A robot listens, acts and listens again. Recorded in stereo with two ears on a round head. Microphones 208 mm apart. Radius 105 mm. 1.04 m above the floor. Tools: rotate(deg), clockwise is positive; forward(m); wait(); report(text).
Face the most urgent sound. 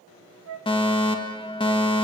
rotate(-25)
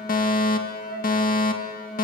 rotate(-130)
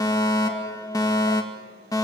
rotate(-20)
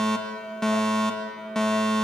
report("Found it: a fire alarm, straight ahead.")